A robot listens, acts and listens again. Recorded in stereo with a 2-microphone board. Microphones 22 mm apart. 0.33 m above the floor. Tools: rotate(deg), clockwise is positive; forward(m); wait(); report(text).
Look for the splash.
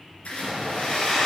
rotate(-90)
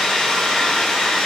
report("Facing where the splash came from. I can't hear it now.")